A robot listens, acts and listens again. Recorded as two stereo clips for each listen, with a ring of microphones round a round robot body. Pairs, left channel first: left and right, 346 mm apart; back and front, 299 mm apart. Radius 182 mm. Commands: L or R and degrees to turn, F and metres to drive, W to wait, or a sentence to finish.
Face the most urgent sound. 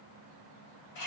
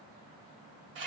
W
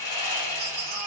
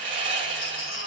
R110
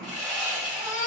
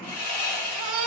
L20
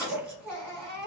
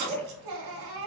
Found it: a baby crying, straight ahead.